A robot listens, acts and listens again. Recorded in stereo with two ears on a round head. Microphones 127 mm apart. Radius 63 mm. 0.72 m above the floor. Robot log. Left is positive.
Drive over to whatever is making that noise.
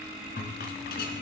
cmd yaw +90
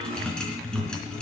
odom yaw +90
cmd fwd 1.0
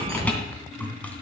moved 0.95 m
note: The rattle is now 10° left.
cmd yaw +10
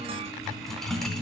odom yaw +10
cmd fwd 1.0
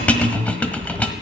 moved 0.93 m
note: The rattle is now 10° left.
cmd yaw +10
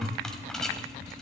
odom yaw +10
cmd fwd 1.0
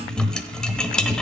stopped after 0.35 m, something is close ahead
end: Arrived at the rattle, straight ahead.